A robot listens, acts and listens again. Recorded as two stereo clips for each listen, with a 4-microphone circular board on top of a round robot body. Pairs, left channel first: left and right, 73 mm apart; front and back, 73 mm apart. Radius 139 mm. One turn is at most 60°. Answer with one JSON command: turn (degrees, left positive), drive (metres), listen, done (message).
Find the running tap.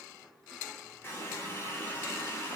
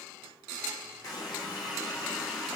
{"turn": 30}
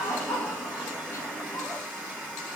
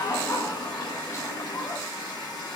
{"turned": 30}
{"turn": -15}
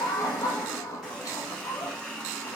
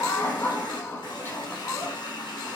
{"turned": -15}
{"done": "Facing the running tap, 1 to 2 m away."}